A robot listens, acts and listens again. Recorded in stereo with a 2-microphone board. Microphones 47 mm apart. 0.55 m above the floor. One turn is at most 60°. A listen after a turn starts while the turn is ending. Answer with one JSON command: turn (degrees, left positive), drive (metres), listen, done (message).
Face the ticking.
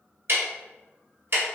{"turn": -55}
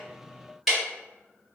{"done": "Facing the ticking."}